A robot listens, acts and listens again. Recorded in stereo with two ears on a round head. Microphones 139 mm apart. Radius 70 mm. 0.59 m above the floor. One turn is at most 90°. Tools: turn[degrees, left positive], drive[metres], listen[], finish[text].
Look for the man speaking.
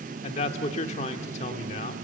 Thought: The man speaking: about 45° left or 135° left.
Action: turn[45]
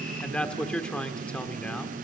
Thought: So it is at 10° left.
Action: turn[10]
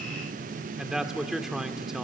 Action: finish[Found it: a man speaking, straight ahead.]